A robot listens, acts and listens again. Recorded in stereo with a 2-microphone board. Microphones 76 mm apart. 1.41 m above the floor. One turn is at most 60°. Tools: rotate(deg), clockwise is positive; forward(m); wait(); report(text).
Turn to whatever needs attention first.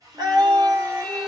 rotate(60)
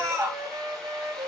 rotate(45)
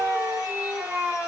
rotate(10)
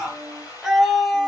report("Facing the scream.")